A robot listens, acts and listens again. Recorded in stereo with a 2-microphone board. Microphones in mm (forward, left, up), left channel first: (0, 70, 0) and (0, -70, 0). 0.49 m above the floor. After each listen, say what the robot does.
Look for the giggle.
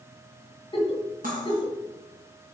Turn 40° left.
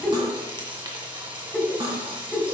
Found it: a giggle, straight ahead.